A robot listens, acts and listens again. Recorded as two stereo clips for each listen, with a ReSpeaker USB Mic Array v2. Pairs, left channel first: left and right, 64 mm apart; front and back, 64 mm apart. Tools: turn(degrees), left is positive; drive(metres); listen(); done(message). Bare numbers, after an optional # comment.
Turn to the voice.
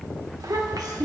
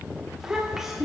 # The child speaking: 95° right.
turn(-95)
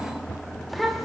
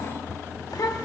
done("Facing the child speaking.")